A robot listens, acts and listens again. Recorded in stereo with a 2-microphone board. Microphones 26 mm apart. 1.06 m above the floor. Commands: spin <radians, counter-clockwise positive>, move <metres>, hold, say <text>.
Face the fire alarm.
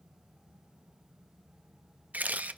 hold
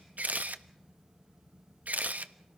hold
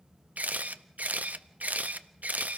say I can't make out a fire alarm, only a camera shutter.